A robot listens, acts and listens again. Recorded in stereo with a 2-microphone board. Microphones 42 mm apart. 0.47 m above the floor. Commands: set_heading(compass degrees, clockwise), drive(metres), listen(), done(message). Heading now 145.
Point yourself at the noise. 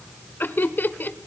set_heading(95)
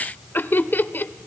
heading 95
set_heading(30)
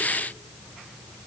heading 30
listen()
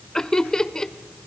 set_heading(15)
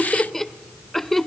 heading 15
done("Found it: laughter, straight ahead, 1 to 2 m away.")